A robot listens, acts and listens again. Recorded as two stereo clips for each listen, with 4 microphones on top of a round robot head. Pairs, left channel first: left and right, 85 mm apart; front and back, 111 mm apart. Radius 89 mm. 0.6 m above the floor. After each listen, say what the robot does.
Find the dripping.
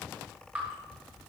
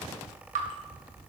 Turn 165° right.
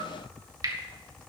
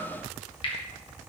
Turn 45° right.
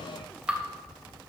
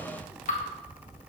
Turn 15° right.
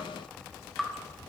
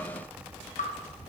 Facing the dripping, 1 to 2 m away.